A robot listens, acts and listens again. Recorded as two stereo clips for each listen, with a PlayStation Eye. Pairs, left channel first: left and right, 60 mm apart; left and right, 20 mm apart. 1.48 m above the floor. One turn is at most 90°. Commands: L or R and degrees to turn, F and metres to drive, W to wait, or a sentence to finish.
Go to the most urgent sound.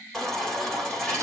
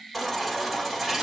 L30
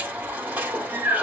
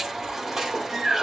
R25
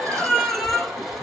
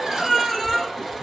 F1.0
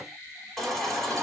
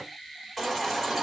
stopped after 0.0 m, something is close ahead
Blocked. The baby crying is further on, straight ahead.